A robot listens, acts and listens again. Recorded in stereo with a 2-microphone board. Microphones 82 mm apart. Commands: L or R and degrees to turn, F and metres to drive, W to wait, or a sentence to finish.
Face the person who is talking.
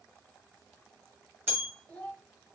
L15
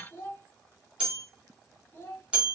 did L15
L150
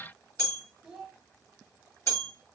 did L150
R10
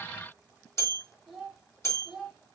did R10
Found it: a child speaking, straight ahead, 1 to 2 m away.